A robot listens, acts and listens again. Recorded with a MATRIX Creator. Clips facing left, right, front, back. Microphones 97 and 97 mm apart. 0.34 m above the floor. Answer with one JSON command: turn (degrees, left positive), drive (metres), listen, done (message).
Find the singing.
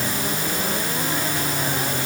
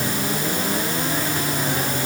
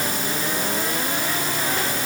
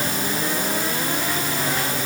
{"listen": true}
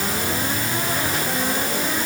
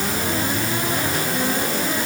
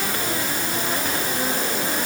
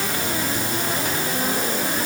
{"listen": true}
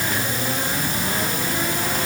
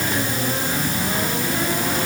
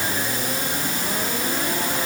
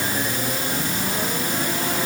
{"done": "I can't make out singing."}